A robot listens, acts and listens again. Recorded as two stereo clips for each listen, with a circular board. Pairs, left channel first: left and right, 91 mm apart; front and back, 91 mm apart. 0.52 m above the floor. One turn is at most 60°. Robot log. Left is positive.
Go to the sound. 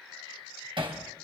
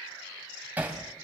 note: The hammering: 110° right.
cmd yaw -60
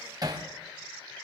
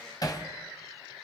note: The hammering is now 45° right.
cmd yaw -45
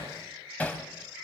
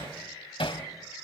note: The hammering is now 15° left.
cmd yaw +15
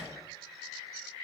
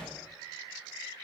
cmd idle
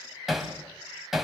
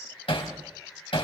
cmd fwd 1.0
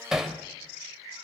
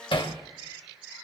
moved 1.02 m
cmd fwd 1.0
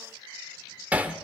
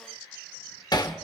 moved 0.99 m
note: The hammering is now 20° right.
cmd yaw -20
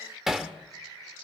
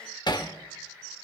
cmd fwd 1.0
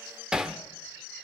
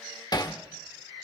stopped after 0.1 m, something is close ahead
note: The hammering is now 10° right.
cmd yaw -10
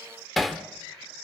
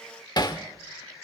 end: Arrived at the hammering, straight ahead.